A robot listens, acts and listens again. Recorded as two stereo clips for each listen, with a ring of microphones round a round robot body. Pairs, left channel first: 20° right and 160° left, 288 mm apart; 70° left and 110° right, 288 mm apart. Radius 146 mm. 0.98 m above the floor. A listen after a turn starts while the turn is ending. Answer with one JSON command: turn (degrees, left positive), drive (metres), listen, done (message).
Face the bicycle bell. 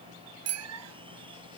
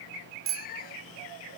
{"turn": -160}
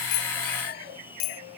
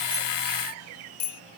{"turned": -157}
{"done": "Facing the bicycle bell."}